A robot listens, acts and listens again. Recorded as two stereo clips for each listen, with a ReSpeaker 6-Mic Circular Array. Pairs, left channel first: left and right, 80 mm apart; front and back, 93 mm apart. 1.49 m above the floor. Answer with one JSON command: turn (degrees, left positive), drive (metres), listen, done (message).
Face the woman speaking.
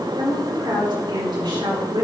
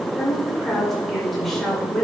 {"turn": -90}
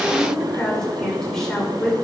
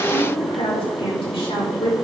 {"done": "Found it: a woman speaking, straight ahead."}